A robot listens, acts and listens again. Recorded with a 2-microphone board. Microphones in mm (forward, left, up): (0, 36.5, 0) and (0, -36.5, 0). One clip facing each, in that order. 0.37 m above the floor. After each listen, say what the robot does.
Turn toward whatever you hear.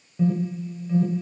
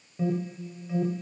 Turn 30° right.
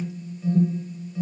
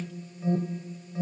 Turn 140° right.
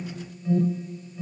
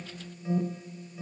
Turn 15° right.
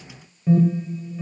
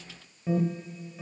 Found it: an alarm, straight ahead.